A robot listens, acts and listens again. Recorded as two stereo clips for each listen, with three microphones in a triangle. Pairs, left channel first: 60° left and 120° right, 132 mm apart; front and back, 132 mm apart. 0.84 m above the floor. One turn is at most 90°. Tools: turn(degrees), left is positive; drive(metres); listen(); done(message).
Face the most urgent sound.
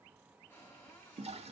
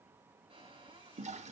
listen()
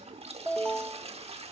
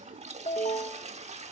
turn(degrees=-25)
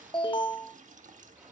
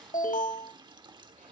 done("Found it: an alarm, straight ahead, under 1 m away.")